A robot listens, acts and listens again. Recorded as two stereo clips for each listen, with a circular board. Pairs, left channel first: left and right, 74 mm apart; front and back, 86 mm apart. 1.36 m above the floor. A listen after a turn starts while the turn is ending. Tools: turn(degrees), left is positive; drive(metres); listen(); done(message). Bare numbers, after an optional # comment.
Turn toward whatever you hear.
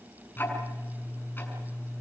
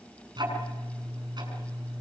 # The ticking: 150° left.
turn(150)
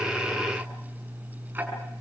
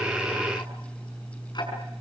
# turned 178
# The ticking is now 30° right.
turn(-30)
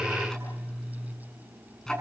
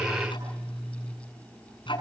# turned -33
done("Found it: ticking, straight ahead.")